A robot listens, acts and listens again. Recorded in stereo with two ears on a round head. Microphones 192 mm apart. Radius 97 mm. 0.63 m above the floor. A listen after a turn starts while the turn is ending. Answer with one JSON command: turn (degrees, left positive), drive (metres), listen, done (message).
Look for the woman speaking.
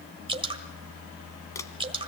{"listen": true}
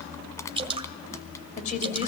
{"turn": 30}
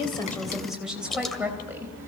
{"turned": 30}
{"turn": -10}
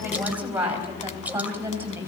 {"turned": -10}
{"turn": -10}
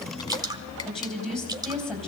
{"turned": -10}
{"done": "Facing the woman speaking."}